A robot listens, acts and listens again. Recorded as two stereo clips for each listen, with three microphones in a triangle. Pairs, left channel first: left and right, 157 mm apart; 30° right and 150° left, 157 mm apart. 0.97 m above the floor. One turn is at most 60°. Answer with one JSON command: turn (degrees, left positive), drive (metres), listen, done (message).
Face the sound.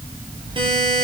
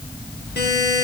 {"turn": -30}
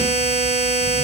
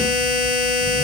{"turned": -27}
{"done": "Found it: a buzzer, straight ahead, over 4 m away."}